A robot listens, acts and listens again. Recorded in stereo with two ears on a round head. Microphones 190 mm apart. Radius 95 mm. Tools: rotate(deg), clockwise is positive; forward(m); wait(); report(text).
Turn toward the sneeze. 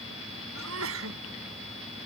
rotate(70)
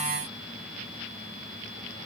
wait()
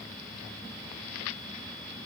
report("I heard a sneeze, but can't make it out now. It was about straight ahead or 40° right.")